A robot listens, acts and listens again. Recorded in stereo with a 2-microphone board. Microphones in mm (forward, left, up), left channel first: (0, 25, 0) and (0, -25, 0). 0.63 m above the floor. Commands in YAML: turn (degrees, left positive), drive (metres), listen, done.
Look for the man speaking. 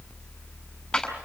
listen: true
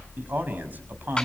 turn: -40
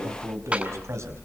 turn: -100
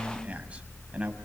turn: -25
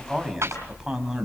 turn: -10
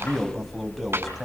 done: "Found it: a man speaking, straight ahead, over 4 m away."